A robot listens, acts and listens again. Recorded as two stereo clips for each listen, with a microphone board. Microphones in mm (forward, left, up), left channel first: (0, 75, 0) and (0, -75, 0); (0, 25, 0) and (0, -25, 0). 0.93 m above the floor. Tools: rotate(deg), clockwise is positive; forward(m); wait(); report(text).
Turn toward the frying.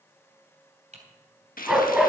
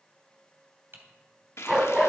rotate(-90)
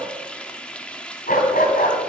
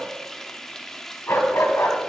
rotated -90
rotate(-10)
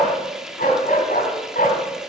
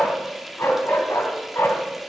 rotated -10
report("Facing the frying, 1 to 2 m away.")